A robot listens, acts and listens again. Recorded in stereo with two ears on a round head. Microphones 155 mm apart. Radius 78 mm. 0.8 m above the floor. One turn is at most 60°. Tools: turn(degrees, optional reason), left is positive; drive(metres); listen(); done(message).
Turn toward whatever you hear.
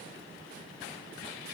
listen()
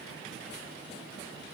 listen()
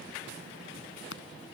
turn(degrees=60, reason="The scissors: about 75° left or 105° left.")
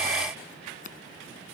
turn(degrees=45, reason="So it is at 45° left.")
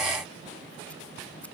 listen()
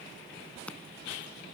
done("Facing the scissors.")